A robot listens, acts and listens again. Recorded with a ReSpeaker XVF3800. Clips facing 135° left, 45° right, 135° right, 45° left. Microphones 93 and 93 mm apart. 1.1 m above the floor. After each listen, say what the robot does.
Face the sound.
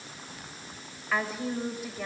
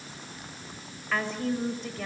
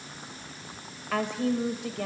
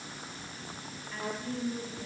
Turn 145° right.
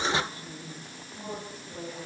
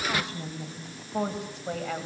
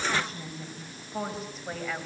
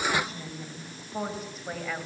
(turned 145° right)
Turn 45° right.
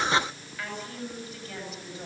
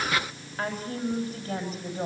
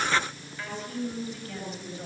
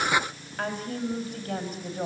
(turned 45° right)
Facing the woman speaking.